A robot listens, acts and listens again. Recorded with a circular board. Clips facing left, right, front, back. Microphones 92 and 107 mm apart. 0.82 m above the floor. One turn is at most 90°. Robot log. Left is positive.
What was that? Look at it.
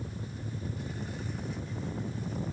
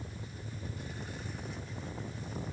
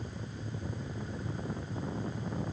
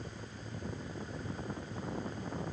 cmd idle
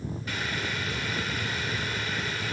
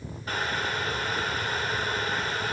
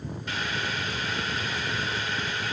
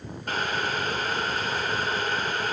note: The boiling: 140° right.
cmd yaw -90
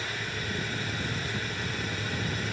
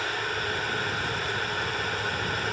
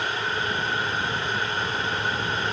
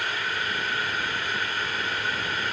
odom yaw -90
note: The boiling is now 65° right.
cmd yaw -65
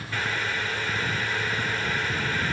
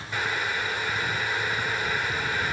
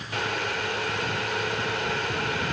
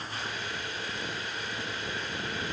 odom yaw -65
note: The boiling is now 15° right.
cmd yaw -15
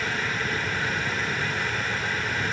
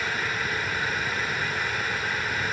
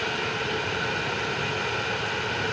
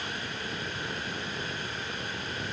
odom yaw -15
end: Found it: boiling, straight ahead, 2 to 4 m away.